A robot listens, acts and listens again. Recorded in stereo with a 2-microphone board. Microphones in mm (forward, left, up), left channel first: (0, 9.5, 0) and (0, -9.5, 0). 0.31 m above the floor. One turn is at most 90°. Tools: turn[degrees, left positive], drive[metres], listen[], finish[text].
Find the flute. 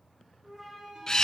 Thought: The flute: about 20° right or 160° right.
Action: turn[-20]
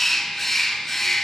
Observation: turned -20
Action: listen[]
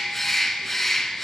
Action: listen[]
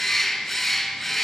Action: finish[I heard a flute, but can't make it out now. It was about straight ahead or 140° right.]